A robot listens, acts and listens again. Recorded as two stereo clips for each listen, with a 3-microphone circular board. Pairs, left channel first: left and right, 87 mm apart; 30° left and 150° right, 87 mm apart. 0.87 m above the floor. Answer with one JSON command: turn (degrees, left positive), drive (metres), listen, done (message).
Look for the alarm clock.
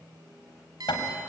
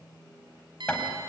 {"turn": -130}
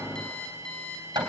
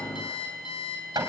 {"turn": 10}
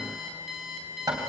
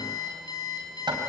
{"done": "Found it: an alarm clock, straight ahead, over 4 m away."}